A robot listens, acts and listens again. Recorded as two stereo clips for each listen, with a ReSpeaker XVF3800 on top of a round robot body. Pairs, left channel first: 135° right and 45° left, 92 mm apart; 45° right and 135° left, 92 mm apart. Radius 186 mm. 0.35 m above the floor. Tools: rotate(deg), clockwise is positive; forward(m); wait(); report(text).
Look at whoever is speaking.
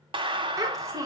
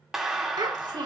rotate(-95)
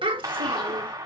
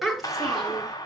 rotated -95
rotate(-45)
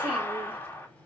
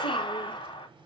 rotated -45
wait()
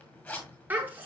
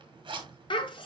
rotate(25)
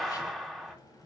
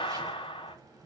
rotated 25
wait()
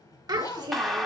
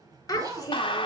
report("Facing the child speaking.")